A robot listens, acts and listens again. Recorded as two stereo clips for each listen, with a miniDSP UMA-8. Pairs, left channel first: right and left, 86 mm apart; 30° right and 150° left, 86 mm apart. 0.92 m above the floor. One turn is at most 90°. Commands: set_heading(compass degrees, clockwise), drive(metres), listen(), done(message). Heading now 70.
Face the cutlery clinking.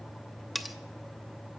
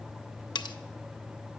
done("Facing the cutlery clinking, under 1 m away.")